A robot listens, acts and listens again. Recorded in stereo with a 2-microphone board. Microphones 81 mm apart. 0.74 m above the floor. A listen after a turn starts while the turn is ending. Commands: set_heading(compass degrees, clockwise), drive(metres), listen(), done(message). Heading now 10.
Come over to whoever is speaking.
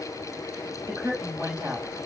set_heading(45)
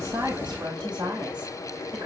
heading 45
set_heading(150)
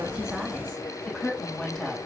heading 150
set_heading(140)
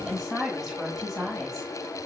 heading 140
drive(1.0)
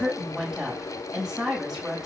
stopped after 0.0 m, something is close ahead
done("Blocked. The woman speaking is further on, straight ahead.")